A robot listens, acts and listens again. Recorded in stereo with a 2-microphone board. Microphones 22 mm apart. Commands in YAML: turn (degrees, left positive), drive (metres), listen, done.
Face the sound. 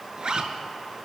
turn: -45
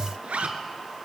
turn: -90
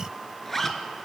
turn: 15
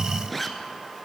turn: 10
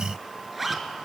done: "Found it: a zipper, straight ahead."